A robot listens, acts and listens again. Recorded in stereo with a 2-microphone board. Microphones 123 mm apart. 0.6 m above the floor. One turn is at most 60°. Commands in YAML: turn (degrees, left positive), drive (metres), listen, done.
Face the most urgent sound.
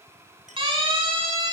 turn: -45
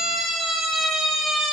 done: "Found it: a siren, straight ahead."